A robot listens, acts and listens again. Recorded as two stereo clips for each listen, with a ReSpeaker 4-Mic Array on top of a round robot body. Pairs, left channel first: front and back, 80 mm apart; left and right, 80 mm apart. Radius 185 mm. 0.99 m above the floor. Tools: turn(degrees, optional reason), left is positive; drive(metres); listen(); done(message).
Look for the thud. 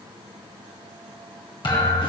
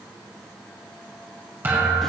turn(degrees=-25, reason="The thud: 25° right.")
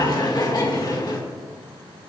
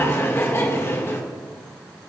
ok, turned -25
done("I heard a thud from this way, but can't make it out now.")